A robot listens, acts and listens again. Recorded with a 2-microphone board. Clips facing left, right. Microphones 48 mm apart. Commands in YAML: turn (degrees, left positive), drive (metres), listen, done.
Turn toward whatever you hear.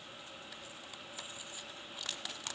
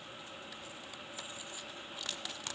listen: true
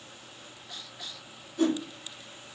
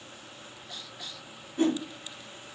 turn: -30
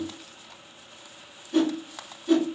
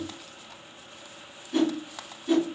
done: "Found it: a whoosh, straight ahead."